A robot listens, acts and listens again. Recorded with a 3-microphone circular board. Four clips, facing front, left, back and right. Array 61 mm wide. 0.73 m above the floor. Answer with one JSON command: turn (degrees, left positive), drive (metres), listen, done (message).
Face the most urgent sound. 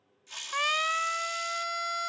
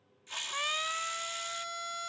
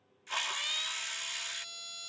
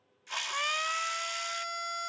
{"turn": -10}
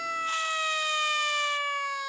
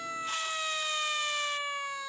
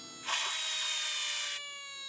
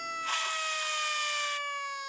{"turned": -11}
{"done": "Facing the siren."}